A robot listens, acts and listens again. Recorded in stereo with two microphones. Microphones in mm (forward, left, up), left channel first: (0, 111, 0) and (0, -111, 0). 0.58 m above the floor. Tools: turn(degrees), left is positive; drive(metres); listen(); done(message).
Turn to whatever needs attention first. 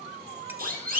turn(degrees=-40)
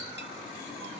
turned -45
listen()
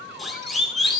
done("Facing the siren, over 4 m away.")